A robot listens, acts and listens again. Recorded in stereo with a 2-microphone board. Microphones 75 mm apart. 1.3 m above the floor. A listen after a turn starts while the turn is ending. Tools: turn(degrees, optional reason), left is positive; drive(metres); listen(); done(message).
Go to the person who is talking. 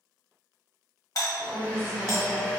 turn(degrees=90)
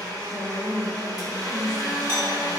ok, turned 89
turn(degrees=10, reason="So it is at 10° left.")
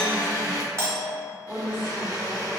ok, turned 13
drive(metres=1.0)
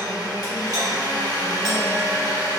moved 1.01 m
listen()
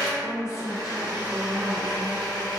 turn(degrees=-10, reason="The woman speaking is now 10° right.")
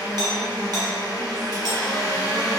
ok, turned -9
listen()
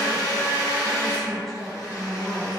drive(metres=1.0)
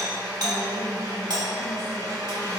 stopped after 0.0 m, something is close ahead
listen()
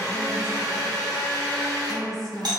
done("I am next to the woman speaking.")